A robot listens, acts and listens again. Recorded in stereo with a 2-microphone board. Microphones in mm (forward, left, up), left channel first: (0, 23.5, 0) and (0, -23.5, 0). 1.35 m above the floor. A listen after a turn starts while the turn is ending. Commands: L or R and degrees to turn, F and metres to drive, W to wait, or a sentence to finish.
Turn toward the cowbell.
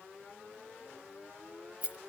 W
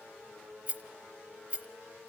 W
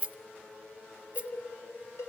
L75
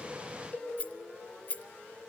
L30
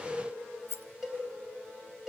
Facing the cowbell.